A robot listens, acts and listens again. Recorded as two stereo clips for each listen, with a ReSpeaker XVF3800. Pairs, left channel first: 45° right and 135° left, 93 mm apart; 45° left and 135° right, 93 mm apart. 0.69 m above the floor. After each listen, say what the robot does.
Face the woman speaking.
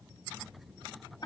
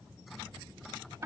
Keep listening.
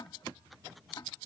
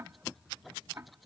Keep listening.
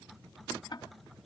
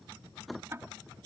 I can't make out a woman speaking, only ticking.